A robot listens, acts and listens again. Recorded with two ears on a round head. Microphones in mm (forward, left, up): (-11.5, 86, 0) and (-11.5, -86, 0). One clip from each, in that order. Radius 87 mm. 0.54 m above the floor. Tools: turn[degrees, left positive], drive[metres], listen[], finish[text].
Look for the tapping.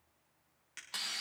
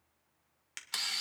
Action: listen[]
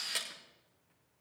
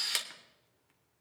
Action: listen[]
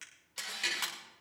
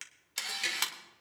Action: turn[-30]
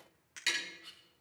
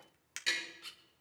Thought: So it is at 15° left.
Action: turn[15]
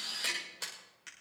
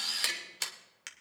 Action: finish[Found it: tapping, straight ahead.]